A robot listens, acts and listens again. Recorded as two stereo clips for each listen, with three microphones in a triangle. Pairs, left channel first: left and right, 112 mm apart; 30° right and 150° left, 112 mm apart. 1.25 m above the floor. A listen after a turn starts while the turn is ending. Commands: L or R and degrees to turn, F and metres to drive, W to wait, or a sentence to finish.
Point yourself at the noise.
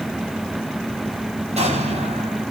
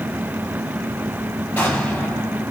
R105
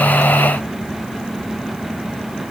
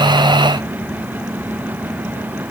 I heard an explosion from this way, but can't make it out now.